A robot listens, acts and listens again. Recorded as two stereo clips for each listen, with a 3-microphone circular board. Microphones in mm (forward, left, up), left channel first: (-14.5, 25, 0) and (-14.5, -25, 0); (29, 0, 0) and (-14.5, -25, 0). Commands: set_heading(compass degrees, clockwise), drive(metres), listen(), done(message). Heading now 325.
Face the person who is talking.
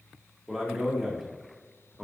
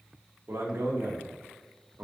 set_heading(140)
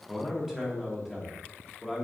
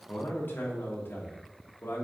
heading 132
set_heading(142)
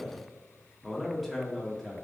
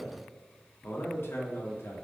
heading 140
done("Found it: a man speaking, straight ahead, 1 to 2 m away.")